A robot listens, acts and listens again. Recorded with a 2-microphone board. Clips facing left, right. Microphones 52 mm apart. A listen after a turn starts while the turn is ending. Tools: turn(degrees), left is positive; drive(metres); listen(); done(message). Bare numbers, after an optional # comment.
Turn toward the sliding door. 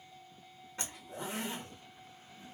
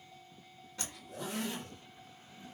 listen()
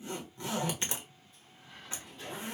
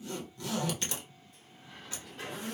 turn(-90)
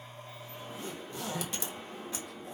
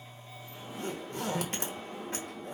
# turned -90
done("Facing the sliding door.")